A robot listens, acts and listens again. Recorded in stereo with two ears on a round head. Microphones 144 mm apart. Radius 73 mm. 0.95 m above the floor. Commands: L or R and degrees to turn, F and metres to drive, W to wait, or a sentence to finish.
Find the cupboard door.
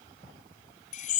W
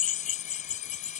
W
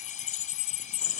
I can't make out a cupboard door to turn to.